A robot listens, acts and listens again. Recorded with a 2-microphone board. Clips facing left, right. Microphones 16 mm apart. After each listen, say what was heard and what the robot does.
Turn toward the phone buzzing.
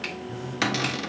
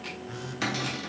The phone buzzing: about 40° right or 140° right. Turn 40° right.
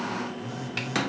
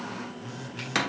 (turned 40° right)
Facing the phone buzzing.